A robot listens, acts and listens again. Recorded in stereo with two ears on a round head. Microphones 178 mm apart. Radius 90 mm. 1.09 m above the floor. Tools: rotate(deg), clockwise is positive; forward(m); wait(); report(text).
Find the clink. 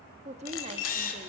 rotate(-90)
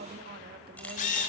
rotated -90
wait()
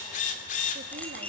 report("Facing the clink, over 4 m away.")